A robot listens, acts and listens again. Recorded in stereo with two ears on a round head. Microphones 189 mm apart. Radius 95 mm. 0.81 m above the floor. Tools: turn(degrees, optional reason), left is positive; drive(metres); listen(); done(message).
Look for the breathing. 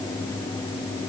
listen()
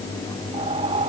turn(degrees=-25, reason="The breathing: about 25° right or 155° right.")
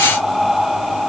done("Found it: breathing, straight ahead.")